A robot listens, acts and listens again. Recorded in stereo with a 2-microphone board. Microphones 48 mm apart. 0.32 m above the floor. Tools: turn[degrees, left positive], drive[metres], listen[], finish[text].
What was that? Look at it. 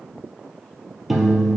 Action: turn[-30]
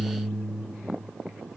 Thought: So it is at 145° right.
Action: turn[-145]
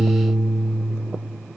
Action: finish[Found it: a piano, straight ahead, 1 to 2 m away.]